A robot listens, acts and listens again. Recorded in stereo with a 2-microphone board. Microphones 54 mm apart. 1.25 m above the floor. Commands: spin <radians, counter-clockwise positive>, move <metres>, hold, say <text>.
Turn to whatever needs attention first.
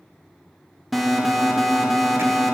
spin 0.52
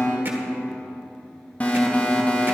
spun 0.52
spin 2.71
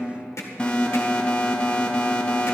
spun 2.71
spin 0.35
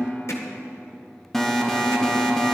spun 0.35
spin 0.17
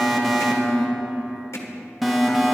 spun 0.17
say Found it: an alarm, straight ahead.